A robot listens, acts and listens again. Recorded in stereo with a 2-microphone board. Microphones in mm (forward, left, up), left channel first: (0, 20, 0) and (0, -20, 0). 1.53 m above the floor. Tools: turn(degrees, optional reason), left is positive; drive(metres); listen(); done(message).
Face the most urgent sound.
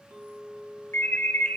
turn(degrees=75, reason="The alarm: about 75° left or 105° left.")
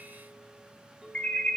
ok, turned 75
turn(degrees=30, reason="So it is at 30° left.")
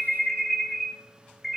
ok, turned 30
done("Found it: an alarm, straight ahead, 2 to 4 m away.")